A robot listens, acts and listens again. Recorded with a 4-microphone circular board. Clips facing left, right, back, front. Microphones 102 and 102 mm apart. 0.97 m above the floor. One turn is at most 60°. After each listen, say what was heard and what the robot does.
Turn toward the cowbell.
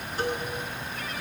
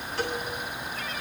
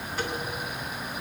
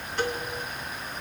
The cowbell: 95° right. Turn 60° right.
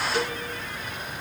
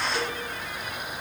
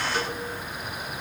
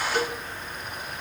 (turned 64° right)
The cowbell is now 35° right. Turn 35° right.
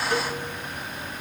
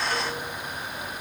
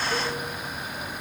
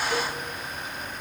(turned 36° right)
Keep listening.
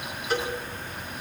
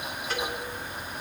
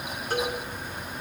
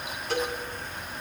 Facing the cowbell.